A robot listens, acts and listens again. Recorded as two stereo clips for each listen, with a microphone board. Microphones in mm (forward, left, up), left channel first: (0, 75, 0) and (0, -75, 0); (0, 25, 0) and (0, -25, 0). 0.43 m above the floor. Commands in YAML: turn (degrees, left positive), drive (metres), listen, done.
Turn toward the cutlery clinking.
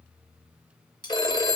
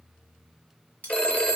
turn: 30
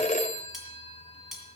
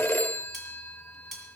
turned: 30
done: "Facing the cutlery clinking."